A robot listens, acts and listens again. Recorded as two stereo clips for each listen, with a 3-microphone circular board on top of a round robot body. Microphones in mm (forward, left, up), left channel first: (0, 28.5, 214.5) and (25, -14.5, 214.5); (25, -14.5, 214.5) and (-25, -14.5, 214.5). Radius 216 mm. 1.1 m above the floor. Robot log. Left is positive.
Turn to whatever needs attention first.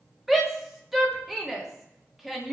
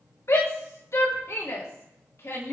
note: The shout: 25° left.
cmd yaw +25
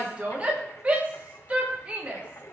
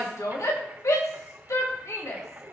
end: Found it: a shout, straight ahead, 2 to 4 m away.